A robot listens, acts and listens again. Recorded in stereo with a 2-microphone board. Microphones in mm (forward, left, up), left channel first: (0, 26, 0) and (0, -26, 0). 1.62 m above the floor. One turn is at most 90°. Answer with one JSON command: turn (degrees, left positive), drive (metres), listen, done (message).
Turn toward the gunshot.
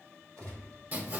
{"turn": 15}
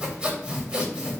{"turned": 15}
{"listen": true}
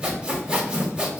{"done": "I heard a gunshot, but can't make it out now. It was about straight ahead or 150° left."}